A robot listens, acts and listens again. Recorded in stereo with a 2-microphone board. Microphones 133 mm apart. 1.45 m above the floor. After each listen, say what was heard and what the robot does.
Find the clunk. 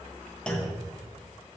Turn 30° left.
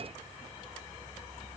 Keep listening.
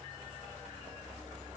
I heard a clunk, but can't make it out now. It was about 25° right or 145° left.